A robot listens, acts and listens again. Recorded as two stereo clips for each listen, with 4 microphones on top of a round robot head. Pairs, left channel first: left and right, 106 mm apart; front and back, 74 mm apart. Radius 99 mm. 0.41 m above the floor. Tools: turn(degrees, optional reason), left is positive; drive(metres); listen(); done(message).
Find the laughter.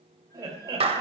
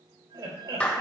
turn(degrees=-145, reason="The laughter: 145° right.")
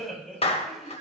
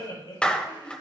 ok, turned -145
done("Facing the laughter, over 4 m away.")